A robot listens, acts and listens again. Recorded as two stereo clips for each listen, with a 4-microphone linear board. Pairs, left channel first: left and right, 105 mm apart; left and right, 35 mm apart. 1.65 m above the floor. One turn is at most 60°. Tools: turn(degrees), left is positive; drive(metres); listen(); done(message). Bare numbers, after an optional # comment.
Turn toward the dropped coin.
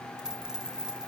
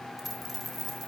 turn(-30)
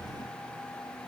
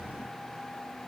listen()
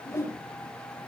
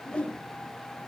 done("I heard a dropped coin, but can't make it out now. It was about 25° left or 145° right.")